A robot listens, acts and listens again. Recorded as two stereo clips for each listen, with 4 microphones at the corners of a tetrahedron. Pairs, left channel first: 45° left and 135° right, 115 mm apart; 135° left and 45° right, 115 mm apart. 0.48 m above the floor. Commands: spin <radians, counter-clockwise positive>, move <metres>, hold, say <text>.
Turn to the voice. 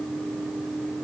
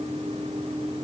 hold
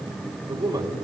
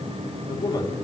spin 3.14
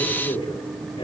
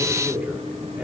spin 0.52
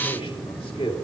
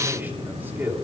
spin 0.44
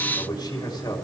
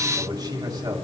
say Facing the man speaking, 2 to 4 m away.